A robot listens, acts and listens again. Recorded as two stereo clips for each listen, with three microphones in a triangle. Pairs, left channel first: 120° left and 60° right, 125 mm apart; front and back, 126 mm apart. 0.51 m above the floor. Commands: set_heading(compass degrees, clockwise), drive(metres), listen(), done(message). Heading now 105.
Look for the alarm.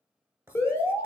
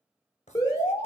set_heading(50)
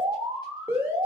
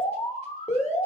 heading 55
done("Found it: an alarm, straight ahead.")